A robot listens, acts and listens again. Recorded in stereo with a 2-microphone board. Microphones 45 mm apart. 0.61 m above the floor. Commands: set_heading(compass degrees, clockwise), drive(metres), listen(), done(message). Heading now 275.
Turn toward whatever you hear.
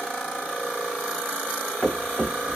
set_heading(240)
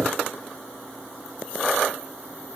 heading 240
listen()
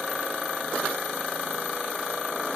done("I heard a thud, but can't make it out now. It was about straight ahead or 110° left.")